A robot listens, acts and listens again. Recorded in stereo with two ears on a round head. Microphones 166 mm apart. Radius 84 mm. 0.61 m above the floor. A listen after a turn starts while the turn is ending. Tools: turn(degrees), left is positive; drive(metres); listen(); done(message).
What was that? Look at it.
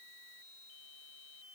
listen()
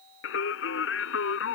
turn(degrees=90)
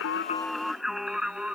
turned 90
done("Found it: singing, straight ahead.")